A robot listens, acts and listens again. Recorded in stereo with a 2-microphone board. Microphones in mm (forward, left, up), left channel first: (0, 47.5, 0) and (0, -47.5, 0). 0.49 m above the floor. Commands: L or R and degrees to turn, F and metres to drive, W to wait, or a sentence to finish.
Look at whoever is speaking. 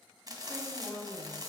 R45
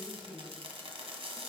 Found it: a woman speaking, straight ahead.